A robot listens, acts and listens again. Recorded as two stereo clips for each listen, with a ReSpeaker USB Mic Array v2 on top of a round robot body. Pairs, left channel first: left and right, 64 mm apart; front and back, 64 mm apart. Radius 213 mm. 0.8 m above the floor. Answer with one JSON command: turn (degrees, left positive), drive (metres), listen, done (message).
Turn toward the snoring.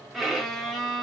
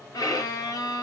{"listen": true}
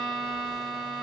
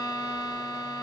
{"listen": true}
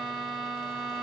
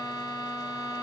{"done": "I can't make out snoring, only a violin."}